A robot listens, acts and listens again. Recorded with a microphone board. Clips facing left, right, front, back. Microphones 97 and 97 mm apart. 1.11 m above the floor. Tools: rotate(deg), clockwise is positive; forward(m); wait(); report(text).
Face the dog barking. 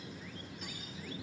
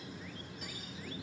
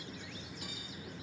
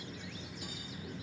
wait()
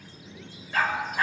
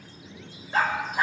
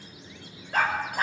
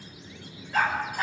rotate(20)
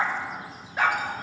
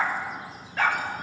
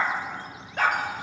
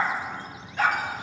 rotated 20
rotate(-25)
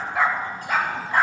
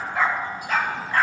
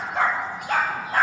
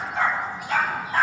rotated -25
rotate(-20)
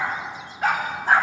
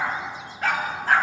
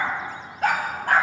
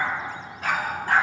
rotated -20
rotate(-20)
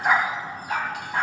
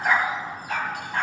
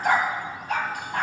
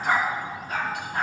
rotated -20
report("Facing the dog barking, 2 to 4 m away.")